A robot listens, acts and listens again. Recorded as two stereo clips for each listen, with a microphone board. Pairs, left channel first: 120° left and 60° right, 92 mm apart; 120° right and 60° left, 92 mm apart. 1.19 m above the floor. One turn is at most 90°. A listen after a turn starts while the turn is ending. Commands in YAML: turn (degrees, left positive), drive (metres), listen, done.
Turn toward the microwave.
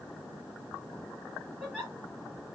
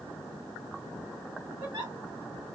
listen: true
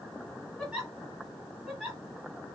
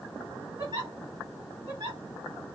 listen: true
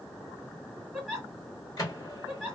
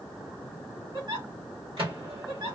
turn: 70
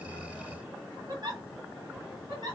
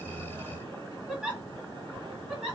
listen: true
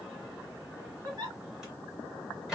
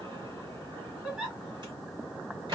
turn: 25
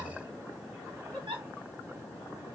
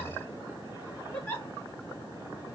listen: true
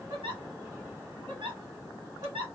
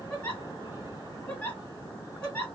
listen: true
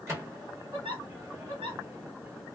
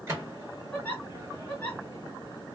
done: "Facing the microwave, 1 to 2 m away."